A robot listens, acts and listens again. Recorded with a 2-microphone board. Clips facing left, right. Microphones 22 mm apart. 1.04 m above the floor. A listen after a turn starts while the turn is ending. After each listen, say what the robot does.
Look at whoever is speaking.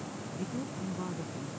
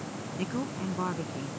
Turn 60° right.
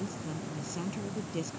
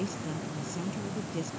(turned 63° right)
Facing the woman speaking.